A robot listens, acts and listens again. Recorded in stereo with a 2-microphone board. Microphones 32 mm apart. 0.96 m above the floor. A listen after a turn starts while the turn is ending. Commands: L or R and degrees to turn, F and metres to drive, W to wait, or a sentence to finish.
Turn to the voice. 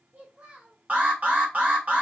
R40
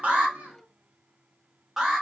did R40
R105
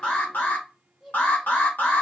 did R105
R10
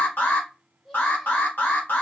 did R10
Facing the child speaking.